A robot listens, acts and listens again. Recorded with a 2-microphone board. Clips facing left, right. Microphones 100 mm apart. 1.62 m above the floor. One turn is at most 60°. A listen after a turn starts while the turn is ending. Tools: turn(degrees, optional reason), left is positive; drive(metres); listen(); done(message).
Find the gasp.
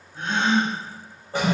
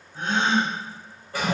turn(degrees=-25, reason="The gasp: about 25° right or 155° right.")
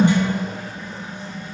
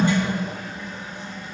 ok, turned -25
listen()
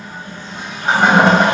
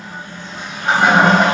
done("I heard a gasp, but can't make it out now. It was about straight ahead or 130° right.")